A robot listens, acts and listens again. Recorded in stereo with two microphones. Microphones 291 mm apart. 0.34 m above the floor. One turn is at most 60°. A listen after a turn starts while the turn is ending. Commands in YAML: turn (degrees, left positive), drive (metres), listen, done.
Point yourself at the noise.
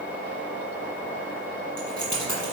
turn: 60
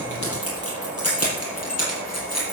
turn: 60
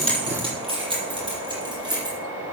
turn: -15
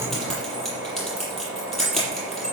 done: "Facing the keys jangling."